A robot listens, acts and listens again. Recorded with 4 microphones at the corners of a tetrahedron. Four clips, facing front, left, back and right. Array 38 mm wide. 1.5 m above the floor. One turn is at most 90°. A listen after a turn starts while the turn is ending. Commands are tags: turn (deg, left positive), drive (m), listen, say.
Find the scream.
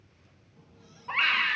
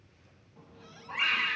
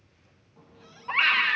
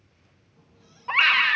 <turn deg="-90"/>
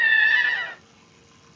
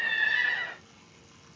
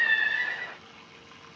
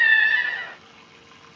<say>Facing the scream.</say>